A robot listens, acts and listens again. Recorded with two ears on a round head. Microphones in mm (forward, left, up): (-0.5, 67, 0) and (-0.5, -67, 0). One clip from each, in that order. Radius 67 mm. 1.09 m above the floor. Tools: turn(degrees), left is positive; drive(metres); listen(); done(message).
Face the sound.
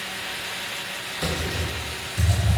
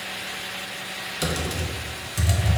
turn(degrees=-40)
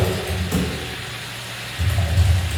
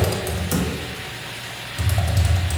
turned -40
turn(degrees=-100)
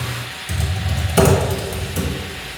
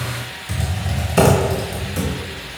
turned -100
turn(degrees=15)
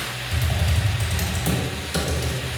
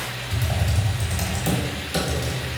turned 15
done("Facing the typing on a keyboard.")